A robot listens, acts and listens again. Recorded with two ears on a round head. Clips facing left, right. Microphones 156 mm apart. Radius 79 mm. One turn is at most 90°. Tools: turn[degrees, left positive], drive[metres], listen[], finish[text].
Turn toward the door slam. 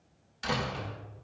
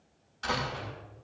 Thought: The door slam: about 20° left or 160° left.
Action: turn[20]
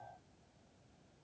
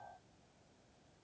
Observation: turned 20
Action: listen[]
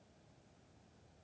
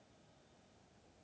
Action: finish[I heard a door slam, but can't make it out now. It was about straight ahead or 140° left.]